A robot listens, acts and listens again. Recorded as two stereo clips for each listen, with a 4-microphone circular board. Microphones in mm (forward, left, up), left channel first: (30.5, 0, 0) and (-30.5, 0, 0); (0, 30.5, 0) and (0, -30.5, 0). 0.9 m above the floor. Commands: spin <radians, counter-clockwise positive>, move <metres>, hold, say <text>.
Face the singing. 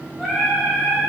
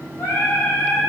spin 1.75
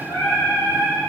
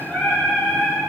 spin 0.52
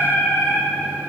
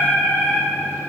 spin 0.44
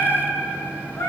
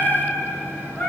spin 0.26
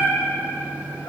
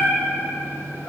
spin 0.17
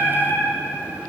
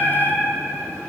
say Found it: singing, straight ahead, 2 to 4 m away.